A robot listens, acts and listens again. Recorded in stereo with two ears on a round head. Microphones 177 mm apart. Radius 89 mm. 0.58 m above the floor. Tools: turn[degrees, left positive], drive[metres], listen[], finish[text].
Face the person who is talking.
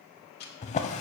Action: listen[]
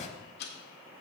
Action: listen[]
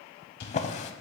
Action: finish[I can't make out anyone speaking to turn to.]